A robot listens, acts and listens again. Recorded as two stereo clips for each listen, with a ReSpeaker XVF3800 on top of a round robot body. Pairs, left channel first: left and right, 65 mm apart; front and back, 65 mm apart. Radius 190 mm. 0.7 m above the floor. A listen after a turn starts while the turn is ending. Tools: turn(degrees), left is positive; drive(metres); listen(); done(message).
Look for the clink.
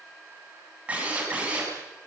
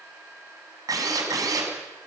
listen()
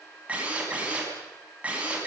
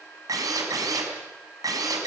listen()
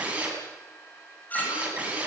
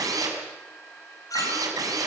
turn(degrees=30)
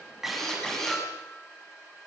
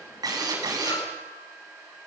listen()
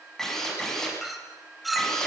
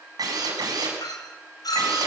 done("Facing the clink, 2 to 4 m away.")